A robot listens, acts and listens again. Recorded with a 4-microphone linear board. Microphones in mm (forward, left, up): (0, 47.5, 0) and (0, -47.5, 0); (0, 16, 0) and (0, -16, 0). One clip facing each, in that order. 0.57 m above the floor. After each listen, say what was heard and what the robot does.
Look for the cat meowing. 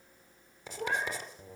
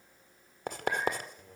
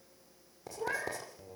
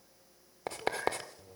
Turn 90° left.
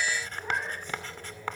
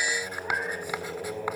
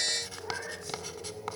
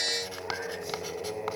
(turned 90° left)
Keep listening.
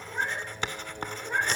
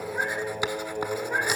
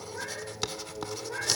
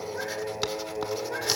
Keep listening.
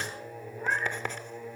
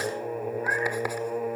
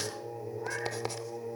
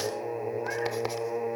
I heard a cat meowing from this way, but can't make it out now.